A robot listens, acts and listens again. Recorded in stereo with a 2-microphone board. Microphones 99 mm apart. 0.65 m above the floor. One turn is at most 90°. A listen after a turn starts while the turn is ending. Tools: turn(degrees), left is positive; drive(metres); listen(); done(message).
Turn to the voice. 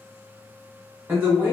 turn(degrees=-20)
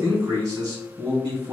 turn(degrees=-90)
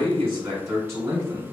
turn(degrees=-35)
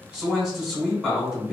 done("Found it: a man speaking, straight ahead.")